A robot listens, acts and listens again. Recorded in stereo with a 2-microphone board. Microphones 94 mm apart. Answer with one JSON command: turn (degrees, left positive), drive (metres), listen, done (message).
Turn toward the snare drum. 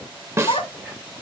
{"turn": -30}
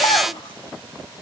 {"listen": true}
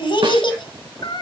{"listen": true}
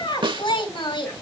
{"turn": -120}
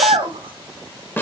{"turn": 25}
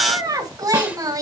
{"listen": true}
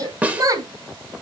{"turn": -15}
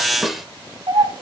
{"done": "Facing the snare drum."}